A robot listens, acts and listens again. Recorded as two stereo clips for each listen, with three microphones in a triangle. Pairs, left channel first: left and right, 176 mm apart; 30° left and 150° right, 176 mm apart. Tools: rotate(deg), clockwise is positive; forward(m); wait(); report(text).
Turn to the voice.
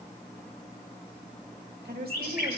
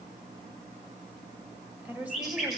rotate(70)
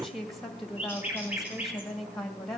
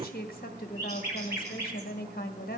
report("Found it: a woman speaking, straight ahead, 1 to 2 m away.")